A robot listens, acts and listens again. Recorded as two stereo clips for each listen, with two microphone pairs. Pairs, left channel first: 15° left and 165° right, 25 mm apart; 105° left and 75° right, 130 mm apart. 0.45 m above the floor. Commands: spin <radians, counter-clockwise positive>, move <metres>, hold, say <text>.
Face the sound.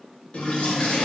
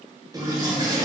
spin -0.26
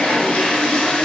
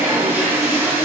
say Found it: a toilet flushing, straight ahead, under 1 m away.